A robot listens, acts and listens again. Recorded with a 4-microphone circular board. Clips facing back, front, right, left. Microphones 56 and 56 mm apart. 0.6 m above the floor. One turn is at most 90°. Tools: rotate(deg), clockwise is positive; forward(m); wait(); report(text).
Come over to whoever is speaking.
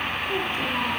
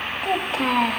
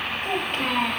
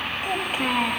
rotate(-10)
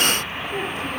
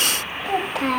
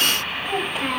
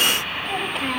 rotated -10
forward(1.0)
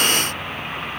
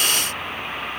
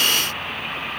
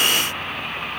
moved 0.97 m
wait()
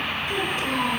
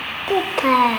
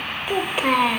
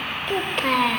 rotate(10)
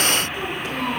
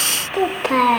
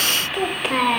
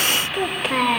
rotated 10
forward(1.0)
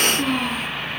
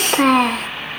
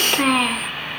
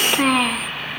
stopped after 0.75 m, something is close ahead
report("I am next to the child speaking.")